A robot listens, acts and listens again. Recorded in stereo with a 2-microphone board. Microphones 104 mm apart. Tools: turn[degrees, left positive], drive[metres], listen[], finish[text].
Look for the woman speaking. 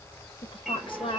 Thought: The woman speaking: about 55° left or 125° left.
Action: turn[55]
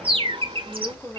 Action: finish[Found it: a woman speaking, straight ahead, 2 to 4 m away.]